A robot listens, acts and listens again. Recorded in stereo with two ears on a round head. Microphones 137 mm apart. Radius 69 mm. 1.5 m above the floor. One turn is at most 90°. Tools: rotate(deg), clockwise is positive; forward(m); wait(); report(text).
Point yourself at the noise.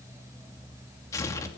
rotate(-20)
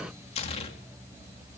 rotate(-90)
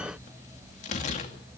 rotate(-50)
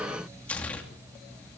rotate(-10)
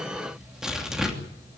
report("Facing the tearing paper, 2 to 4 m away.")